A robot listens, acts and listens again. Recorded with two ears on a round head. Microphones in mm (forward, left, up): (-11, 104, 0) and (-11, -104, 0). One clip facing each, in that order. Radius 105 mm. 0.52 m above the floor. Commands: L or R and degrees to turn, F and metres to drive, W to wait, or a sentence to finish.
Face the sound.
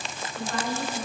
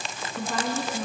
R75
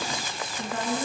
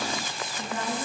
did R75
Facing the woman speaking.